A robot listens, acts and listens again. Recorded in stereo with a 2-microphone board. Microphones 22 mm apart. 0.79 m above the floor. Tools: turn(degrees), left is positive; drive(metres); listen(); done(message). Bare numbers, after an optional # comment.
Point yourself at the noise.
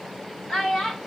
turn(90)
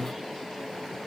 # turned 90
listen()
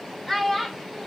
done("Found it: a child speaking, straight ahead, 2 to 4 m away.")